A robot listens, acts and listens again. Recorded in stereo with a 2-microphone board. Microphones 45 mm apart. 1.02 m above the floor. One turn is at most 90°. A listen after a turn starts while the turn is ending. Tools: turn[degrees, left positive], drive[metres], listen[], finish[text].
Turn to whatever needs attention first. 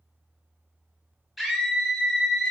Action: turn[-30]
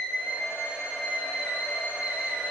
Thought: So it is at 145° right.
Action: turn[-90]
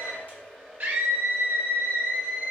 Thought: The scream is now 45° right.
Action: turn[-45]
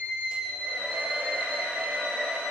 Thought: The scream is now 15° left.
Action: turn[15]
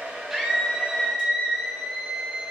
Action: finish[Found it: a scream, straight ahead, 1 to 2 m away.]